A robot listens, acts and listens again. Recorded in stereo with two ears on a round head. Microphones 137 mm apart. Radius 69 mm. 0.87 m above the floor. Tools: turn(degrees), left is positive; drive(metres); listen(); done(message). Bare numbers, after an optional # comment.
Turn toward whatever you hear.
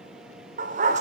# The dog barking: about 50° right or 130° right.
turn(-50)
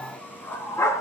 # So it is at 20° left.
turn(20)
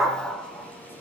done("Found it: a dog barking, straight ahead, 2 to 4 m away.")